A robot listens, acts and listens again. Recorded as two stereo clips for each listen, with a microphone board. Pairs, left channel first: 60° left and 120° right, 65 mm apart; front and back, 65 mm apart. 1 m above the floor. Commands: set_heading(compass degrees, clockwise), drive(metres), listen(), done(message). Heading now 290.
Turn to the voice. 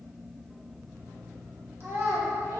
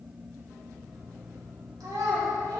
set_heading(95)
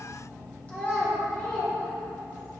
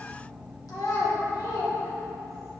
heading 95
done("Found it: a child speaking, straight ahead.")